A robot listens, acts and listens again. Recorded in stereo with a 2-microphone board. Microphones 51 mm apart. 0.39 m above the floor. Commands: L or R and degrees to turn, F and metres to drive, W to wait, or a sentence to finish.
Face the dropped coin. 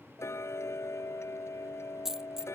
R30
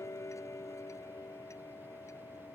W
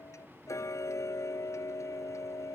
I heard a dropped coin, but can't make it out now. It was about 20° left or 140° right.